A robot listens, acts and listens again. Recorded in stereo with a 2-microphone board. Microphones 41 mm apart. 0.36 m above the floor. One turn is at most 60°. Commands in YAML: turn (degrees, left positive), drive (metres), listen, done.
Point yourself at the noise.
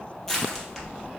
turn: 30
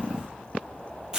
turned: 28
turn: -15
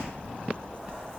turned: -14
done: "Found it: crushing, straight ahead."